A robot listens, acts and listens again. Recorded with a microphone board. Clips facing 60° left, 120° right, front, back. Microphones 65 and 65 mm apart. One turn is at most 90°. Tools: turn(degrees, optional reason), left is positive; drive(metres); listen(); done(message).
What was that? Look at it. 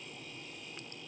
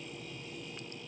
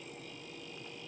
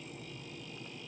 listen()
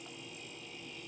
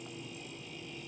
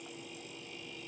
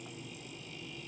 listen()
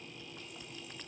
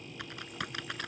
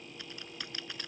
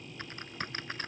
turn(degrees=-90, reason="The typing on a keyboard: 130° right.")
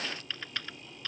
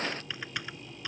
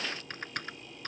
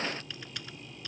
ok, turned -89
turn(degrees=-45, reason="The typing on a keyboard is now 45° right.")
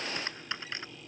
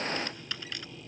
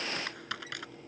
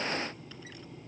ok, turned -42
done("Found it: typing on a keyboard, straight ahead.")